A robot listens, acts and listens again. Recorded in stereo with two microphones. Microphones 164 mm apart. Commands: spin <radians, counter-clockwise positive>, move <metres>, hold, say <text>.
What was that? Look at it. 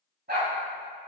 spin -1.57
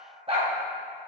spin -0.70
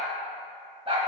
spin -0.61
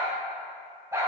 spin -0.26
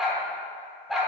say Found it: a dog barking, straight ahead, 1 to 2 m away.